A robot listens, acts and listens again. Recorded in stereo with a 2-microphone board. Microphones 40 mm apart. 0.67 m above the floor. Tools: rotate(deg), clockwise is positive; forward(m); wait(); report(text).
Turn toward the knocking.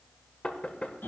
rotate(-35)
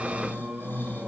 wait()
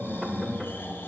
wait()
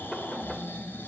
report("I heard knocking, but can't make it out now. It was about straight ahead or 110° left.")